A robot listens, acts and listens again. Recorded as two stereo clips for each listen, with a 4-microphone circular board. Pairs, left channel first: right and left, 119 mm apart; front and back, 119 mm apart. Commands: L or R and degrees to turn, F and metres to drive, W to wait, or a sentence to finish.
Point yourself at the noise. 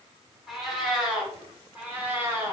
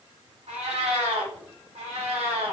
L160
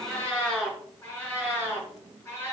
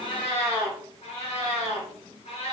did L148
R25
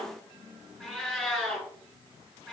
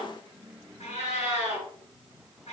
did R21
Facing the cat meowing.